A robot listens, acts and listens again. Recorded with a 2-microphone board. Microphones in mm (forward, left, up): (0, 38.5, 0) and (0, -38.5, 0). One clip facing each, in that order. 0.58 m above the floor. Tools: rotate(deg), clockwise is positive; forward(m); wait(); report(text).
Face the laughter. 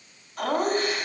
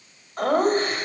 rotate(40)
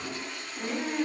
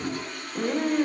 rotate(95)
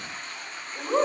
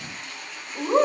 report("Found it: laughter, straight ahead.")